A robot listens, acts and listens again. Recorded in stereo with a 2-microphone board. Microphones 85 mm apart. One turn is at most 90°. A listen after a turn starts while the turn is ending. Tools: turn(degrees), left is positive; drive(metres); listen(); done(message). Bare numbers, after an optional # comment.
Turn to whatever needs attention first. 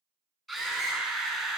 turn(30)
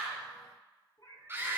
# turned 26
# So it is at 25° right.
turn(-25)
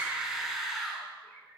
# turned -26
done("Facing the scream, over 4 m away.")